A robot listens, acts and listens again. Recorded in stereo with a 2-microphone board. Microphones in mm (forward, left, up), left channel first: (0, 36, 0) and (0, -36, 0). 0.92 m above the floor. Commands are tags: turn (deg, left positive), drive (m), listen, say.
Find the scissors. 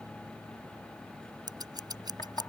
<turn deg="-90"/>
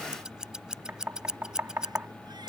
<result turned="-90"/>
<turn deg="-10"/>
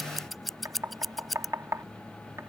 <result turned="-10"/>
<say>Found it: scissors, straight ahead.</say>